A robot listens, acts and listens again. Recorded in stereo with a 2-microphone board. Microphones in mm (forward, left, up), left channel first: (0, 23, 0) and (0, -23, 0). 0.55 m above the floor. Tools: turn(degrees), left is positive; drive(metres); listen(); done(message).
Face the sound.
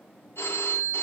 turn(degrees=60)
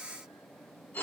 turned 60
turn(degrees=55)
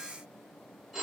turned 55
done("Found it: a phone ringing, straight ahead.")